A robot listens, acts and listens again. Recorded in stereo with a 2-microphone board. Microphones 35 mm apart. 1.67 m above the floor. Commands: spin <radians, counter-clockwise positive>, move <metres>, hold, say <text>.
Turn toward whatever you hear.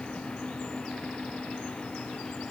hold
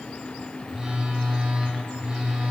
spin -0.44
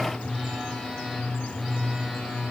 say Found it: a phone buzzing, straight ahead.